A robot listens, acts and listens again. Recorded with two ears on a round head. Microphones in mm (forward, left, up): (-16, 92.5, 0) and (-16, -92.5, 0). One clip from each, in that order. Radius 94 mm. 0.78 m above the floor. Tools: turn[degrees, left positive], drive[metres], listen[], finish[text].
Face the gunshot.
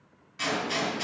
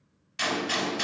Thought: The gunshot: about 65° right or 115° right.
Action: turn[-65]
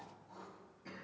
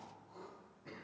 Action: listen[]
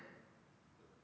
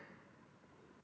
Action: finish[I heard a gunshot, but can't make it out now. It was about straight ahead or 50° right.]